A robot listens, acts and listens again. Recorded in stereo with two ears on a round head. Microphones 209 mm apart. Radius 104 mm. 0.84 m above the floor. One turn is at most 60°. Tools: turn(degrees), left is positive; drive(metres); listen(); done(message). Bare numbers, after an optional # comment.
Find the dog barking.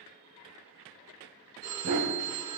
turn(-60)
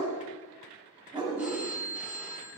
# So it is at 15° right.
turn(-15)
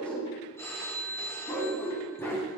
# The dog barking is now 10° left.
turn(10)
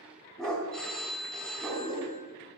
done("Found it: a dog barking, straight ahead, 2 to 4 m away.")